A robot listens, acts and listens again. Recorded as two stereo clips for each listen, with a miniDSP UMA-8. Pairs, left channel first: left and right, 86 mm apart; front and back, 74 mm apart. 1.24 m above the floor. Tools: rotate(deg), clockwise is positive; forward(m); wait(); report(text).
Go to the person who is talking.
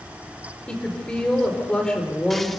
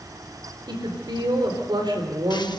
rotate(-170)
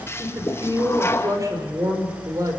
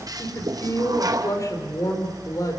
rotate(45)
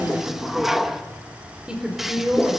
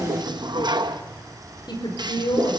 rotate(10)
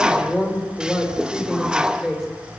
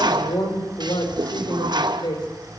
forward(1.0)
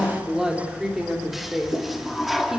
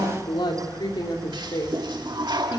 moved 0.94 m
forward(1.0)
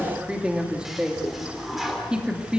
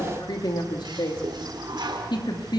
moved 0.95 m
rotate(10)
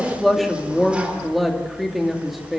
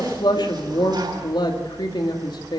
forward(1.0)
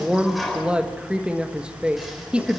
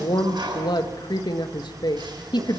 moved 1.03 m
rotate(10)
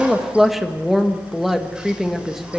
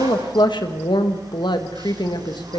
forward(1.0)
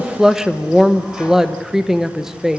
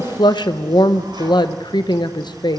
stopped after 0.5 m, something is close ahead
report("I am next to the woman speaking.")